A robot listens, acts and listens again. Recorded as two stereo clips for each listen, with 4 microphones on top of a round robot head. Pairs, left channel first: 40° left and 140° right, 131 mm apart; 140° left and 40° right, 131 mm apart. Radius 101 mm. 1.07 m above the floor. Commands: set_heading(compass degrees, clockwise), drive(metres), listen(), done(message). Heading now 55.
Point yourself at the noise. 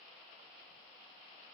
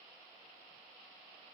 listen()
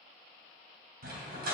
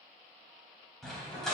set_heading(190)
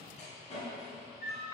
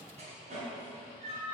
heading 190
done("Facing the dog barking.")